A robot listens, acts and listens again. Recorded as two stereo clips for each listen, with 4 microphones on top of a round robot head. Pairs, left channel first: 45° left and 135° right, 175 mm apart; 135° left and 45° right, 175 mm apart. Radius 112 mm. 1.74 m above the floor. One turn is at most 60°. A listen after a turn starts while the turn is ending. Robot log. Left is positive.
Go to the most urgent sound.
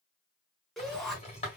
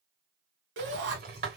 note: The shout: 45° right.
cmd yaw -45
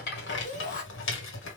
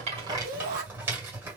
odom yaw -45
cmd fwd 1.0
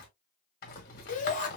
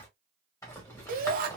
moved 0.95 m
cmd fwd 1.0
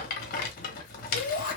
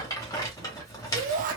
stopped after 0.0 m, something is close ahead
end: Arrived at the shout, straight ahead.